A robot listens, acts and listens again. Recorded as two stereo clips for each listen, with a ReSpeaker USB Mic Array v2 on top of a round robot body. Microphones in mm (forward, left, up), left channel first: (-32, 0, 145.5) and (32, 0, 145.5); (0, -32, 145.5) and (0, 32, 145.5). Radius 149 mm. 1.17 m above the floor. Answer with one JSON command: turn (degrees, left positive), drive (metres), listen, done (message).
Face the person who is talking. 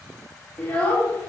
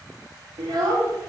{"turn": 110}
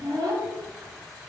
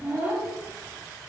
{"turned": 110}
{"turn": 20}
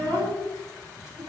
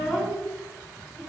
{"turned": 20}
{"done": "Found it: a child speaking, straight ahead."}